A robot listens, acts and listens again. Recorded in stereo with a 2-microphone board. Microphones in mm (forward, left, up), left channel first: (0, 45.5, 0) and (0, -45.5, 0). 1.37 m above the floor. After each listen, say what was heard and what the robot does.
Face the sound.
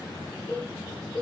Turn 30° right.
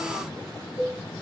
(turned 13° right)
So it is at 10° left. Turn 10° left.
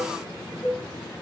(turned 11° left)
Facing the cowbell, 2 to 4 m away.